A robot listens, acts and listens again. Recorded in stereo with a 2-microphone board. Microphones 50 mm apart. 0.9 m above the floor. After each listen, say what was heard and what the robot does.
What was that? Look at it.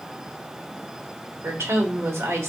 The woman speaking: about 70° right or 110° right. Turn 70° right.
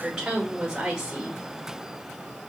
So it is at 15° right. Turn 15° right.
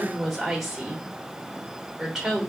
Facing the woman speaking, under 1 m away.